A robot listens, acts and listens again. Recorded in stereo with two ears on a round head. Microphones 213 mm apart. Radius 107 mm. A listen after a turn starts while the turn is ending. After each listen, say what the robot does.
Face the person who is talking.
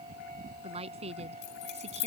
Turn 30° right.
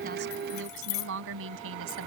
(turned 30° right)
Turn 120° right.
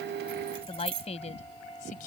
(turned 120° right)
Turn 35° left.
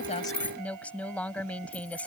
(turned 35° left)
Found it: a woman speaking, straight ahead.